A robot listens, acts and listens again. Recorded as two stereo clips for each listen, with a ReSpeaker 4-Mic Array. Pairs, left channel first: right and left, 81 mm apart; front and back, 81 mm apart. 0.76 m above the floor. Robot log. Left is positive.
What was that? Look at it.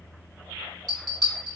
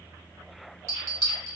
note: The bell: 130° left.
cmd yaw +130
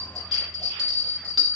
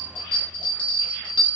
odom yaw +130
end: Facing the bell.